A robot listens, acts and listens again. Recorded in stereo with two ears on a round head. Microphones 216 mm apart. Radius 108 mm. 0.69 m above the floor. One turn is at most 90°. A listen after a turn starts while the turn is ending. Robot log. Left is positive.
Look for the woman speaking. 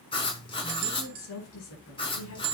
note: The woman speaking: about 70° left or 110° left.
cmd yaw +70
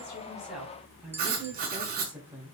note: So it is at 10° right.
cmd yaw -10
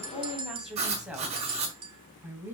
note: The woman speaking is now 10° right.
cmd yaw -10
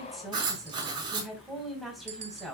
end: Found it: a woman speaking, straight ahead.